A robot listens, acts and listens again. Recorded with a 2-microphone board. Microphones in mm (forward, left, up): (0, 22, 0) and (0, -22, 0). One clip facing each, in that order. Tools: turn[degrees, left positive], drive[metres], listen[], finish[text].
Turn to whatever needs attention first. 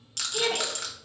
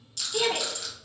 Action: turn[-90]
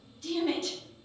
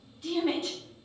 Thought: So it is at 15° right.
Action: turn[-15]
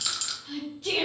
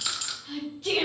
Action: finish[Found it: a shout, straight ahead.]